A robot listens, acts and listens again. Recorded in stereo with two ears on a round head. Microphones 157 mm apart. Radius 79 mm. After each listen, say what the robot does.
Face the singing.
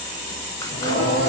Turn 60° left.
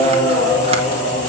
Found it: singing, straight ahead, over 4 m away.